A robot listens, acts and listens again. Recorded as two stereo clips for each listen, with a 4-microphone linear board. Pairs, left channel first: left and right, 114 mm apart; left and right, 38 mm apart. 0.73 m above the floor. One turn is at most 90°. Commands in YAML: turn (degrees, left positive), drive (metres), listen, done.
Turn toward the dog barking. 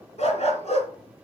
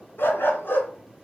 turn: 75
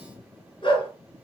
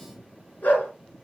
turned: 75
turn: 50
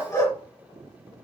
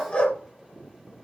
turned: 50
turn: 30
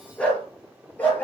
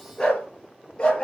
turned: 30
turn: 15
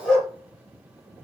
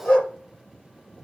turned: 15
done: "Facing the dog barking, over 4 m away."